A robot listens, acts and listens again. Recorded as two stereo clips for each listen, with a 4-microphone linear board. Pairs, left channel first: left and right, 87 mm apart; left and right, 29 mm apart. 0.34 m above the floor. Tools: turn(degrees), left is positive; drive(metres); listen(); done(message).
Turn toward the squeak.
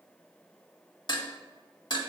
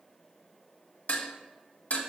listen()
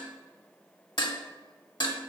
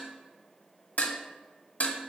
listen()
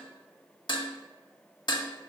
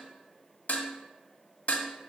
done("I can't make out a squeak to turn to.")